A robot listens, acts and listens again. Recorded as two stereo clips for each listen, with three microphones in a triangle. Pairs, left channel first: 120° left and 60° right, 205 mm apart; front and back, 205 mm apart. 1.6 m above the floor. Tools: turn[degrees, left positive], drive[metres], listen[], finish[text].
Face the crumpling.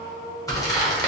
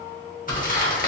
Thought: The crumpling: 45° left.
Action: turn[45]
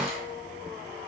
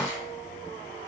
Action: listen[]
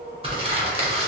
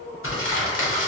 Action: finish[Facing the crumpling.]